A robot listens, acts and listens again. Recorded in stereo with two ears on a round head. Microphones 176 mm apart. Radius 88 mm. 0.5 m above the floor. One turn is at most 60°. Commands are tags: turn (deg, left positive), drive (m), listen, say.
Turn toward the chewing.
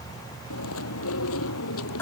<turn deg="60"/>
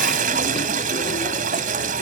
<turn deg="30"/>
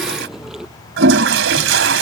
<say>Facing the chewing.</say>